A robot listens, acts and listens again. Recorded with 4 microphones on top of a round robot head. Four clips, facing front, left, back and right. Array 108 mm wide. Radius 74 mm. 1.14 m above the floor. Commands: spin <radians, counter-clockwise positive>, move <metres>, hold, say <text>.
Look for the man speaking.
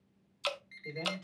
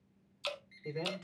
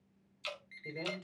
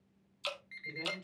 spin 1.57
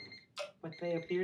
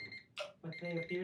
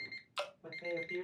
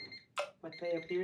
spin -0.52
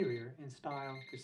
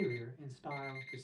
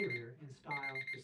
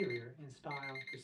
spin 0.17
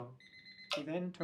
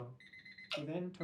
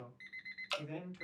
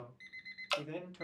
spin 0.17
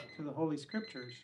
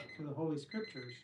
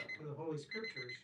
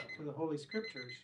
say Facing the man speaking, 2 to 4 m away.